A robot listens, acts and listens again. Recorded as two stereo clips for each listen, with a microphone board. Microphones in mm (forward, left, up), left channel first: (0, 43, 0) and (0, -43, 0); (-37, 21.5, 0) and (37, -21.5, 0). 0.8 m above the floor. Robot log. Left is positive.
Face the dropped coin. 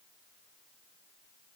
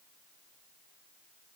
cmd idle
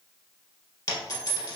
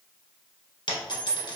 note: The dropped coin: 130° left.
cmd yaw +130
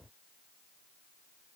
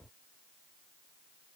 end: Facing where the dropped coin came from. I can't hear it now.